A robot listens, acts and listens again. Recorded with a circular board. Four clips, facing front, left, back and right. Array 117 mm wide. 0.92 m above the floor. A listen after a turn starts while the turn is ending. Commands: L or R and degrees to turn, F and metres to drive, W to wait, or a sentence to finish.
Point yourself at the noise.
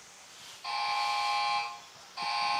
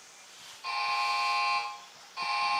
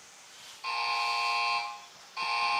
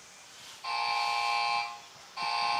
R175
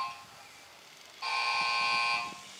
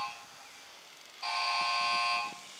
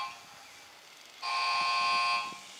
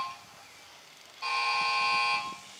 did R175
R50
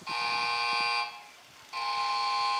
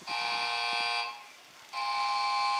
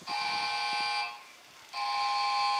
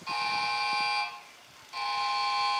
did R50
Found it: a buzzer, straight ahead.